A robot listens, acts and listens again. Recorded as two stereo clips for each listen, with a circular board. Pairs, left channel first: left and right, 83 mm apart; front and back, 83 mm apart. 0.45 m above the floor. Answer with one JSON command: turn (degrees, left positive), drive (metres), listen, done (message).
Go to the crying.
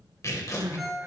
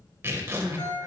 {"turn": -140}
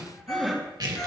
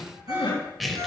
{"drive": 1.0}
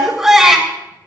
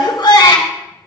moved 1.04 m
{"drive": 1.0}
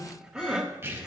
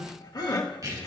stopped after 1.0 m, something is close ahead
{"turn": -15}
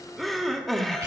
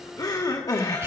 {"done": "I am next to the crying."}